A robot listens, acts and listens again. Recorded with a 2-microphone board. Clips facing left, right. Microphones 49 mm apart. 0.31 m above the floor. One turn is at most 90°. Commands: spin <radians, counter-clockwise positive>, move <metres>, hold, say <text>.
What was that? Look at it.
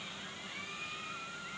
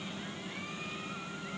hold
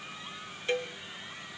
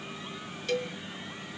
spin 0.52
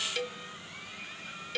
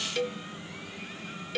say Found it: a cowbell, straight ahead.